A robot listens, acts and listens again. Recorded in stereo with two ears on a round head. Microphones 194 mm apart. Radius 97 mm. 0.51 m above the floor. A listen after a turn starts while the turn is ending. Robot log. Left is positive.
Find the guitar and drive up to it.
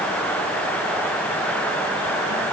cmd idle
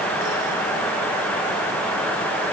cmd idle
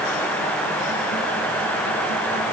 end: I can't make out a guitar.